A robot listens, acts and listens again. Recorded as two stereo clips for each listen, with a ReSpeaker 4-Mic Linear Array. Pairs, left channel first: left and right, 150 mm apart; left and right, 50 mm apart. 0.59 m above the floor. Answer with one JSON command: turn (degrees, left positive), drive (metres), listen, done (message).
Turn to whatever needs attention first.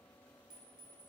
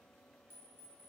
{"listen": true}
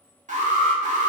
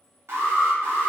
{"turn": -55}
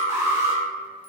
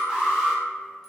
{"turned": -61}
{"turn": -20}
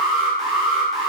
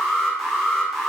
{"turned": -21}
{"done": "Facing the alarm."}